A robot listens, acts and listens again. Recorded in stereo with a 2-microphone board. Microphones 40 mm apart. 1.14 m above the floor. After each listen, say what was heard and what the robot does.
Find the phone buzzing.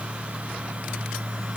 Keep listening.
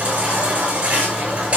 Keep listening.
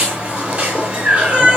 I can't make out a phone buzzing, only a baby crying.